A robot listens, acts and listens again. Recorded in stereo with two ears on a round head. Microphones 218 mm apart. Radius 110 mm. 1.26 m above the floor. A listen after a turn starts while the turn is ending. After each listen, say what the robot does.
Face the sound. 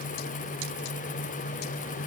Keep listening.
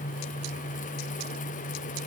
Keep listening.
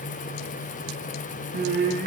Turn 40° right.
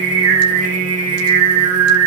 Turn 95° right.
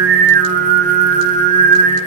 Turn 35° right.
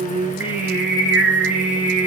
Found it: singing, straight ahead.